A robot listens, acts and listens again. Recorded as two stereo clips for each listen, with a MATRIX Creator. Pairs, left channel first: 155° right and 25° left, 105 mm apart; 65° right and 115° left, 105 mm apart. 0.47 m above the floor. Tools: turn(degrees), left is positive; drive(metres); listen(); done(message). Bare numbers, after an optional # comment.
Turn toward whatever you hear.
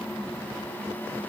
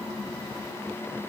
listen()
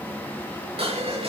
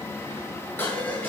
done("Found it: dishes clattering, straight ahead.")